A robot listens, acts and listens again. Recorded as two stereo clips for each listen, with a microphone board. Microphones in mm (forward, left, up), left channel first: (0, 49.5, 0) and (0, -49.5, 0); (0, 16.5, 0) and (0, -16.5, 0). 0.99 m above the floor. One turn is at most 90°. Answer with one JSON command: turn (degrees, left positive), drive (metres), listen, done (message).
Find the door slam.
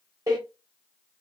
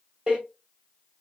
{"turn": -40}
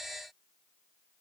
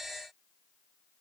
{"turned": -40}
{"listen": true}
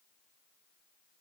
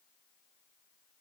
{"done": "I heard a door slam, but can't make it out now. It was about straight ahead or 100° right."}